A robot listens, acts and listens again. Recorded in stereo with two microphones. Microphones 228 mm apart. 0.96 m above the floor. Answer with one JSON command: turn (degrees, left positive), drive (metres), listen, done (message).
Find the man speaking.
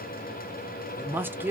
{"turn": -30}
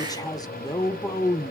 {"turn": 20}
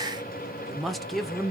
{"done": "Found it: a man speaking, straight ahead, under 1 m away."}